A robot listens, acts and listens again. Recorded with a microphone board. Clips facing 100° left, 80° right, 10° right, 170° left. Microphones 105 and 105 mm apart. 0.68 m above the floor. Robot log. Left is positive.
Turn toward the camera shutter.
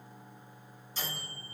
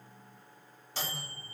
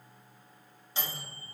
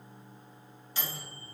cmd idle
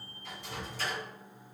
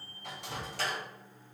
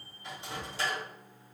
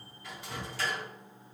cmd idle
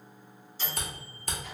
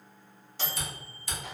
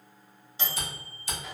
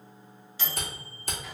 note: The camera shutter: 135° left.
cmd yaw +135
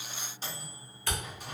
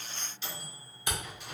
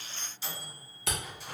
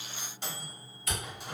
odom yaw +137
end: Facing the camera shutter.